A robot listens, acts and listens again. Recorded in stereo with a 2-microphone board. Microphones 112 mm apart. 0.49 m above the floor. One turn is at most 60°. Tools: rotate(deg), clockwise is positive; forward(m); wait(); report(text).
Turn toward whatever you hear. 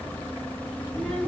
rotate(-30)
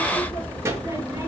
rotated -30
rotate(25)
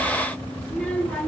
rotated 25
rotate(-15)
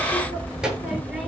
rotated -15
report("Found it: a child speaking, straight ahead.")